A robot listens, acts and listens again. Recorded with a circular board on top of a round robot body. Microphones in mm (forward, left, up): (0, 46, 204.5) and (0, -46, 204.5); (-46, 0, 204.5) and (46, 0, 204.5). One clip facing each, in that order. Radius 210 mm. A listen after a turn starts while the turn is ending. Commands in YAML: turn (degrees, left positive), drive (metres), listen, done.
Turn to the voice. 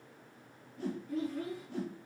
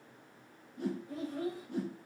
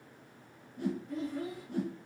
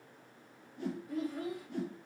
turn: -85
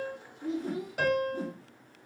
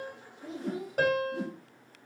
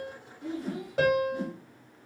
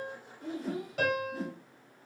turn: -40
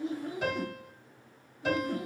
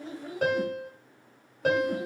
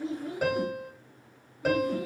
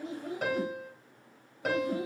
listen: true
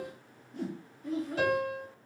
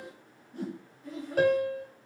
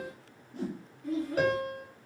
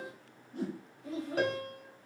done: "Facing the child speaking, 1 to 2 m away."